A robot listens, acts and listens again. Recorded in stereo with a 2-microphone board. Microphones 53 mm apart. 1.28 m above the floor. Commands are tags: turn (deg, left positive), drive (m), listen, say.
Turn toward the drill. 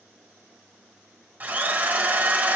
<turn deg="-35"/>
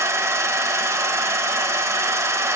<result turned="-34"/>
<turn deg="-110"/>
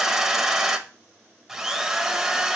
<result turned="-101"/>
<say>Facing the drill, under 1 m away.</say>